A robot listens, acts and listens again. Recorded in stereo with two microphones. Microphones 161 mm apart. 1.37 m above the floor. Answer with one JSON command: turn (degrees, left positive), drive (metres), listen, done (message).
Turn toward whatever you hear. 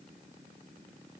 {"listen": true}
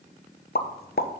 {"turn": 70}
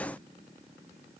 {"listen": true}
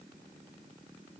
{"done": "I heard a pop, but can't make it out now. It was about straight ahead or 40° left."}